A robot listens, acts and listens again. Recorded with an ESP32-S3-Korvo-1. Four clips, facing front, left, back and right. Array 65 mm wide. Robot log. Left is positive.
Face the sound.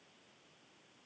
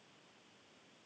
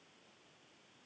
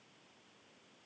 cmd idle
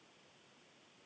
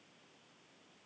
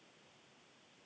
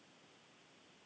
cmd idle
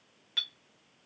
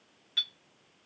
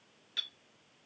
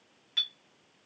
note: The clink: 25° right.
cmd yaw -25
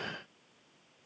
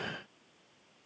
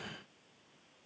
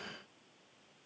cmd idle
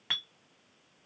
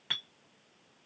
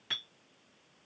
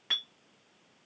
note: The clink is now 10° right.
cmd yaw -10
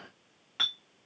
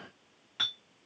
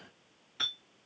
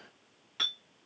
end: Facing the clink, 1 to 2 m away.